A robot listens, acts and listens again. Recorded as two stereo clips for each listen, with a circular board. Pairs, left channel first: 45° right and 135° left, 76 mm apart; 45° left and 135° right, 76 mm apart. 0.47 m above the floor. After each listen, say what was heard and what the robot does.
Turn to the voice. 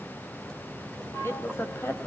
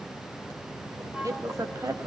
The woman speaking: 100° right. Turn 100° right.
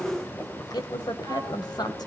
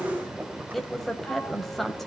The woman speaking is now 45° right. Turn 45° right.
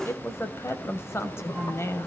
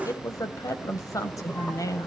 Facing the woman speaking.